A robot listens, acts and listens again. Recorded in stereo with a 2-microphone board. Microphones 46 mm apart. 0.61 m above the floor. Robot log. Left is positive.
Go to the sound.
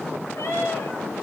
cmd yaw +90
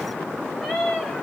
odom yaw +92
note: So it is at 10° left.
cmd yaw +10
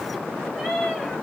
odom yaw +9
cmd fwd 1.0
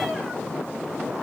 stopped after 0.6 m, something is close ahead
cmd idle
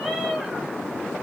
end: Something is in my way. I am facing the cat meowing but have not reached it.